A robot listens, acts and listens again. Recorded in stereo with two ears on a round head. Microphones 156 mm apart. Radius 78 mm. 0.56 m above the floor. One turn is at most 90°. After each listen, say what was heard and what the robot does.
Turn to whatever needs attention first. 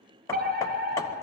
The fire alarm: about 55° right or 125° right. Turn 55° right.
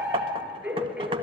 Found it: a fire alarm, straight ahead, over 4 m away.